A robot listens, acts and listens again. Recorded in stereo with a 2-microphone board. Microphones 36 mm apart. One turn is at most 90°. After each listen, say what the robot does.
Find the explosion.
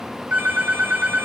Keep listening.
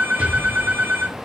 Turn 35° right.
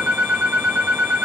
Keep listening.
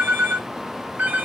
I heard an explosion, but can't make it out now. It was about straight ahead or 110° right.